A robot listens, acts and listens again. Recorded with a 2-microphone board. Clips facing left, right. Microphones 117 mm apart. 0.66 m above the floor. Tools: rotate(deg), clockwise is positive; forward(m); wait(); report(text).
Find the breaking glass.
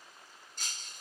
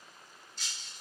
rotate(-50)
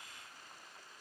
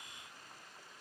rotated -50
wait()
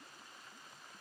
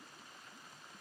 report("I heard breaking glass, but can't make it out now. It was about straight ahead or 80° left.")